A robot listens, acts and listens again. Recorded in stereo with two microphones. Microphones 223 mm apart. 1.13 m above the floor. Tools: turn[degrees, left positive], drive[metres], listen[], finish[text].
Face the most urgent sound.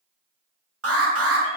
Action: turn[-90]
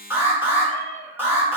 Thought: So it is at 10° right.
Action: turn[-10]
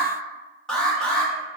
Action: finish[Found it: an alarm, straight ahead, 1 to 2 m away.]